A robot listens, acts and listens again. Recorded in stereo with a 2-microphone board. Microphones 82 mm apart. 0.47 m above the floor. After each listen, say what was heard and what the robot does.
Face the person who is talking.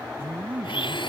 The man speaking: about 25° right or 155° right. Turn 25° right.
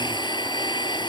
Keep listening.
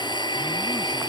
Keep listening.
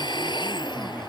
I heard a man speaking, but can't make it out now. It was about straight ahead or 130° right.